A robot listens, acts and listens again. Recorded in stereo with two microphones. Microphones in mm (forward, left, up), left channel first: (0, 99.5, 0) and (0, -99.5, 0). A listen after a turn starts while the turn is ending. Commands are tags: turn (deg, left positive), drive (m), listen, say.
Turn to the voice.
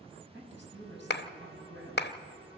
<turn deg="-65"/>
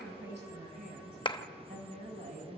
<turn deg="-45"/>
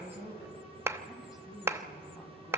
<say>Facing the woman speaking, over 4 m away.</say>